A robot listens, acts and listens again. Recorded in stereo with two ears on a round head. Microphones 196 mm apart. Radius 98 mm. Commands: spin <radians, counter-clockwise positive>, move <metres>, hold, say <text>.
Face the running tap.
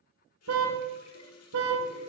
spin 1.57
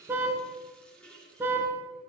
say Facing the running tap.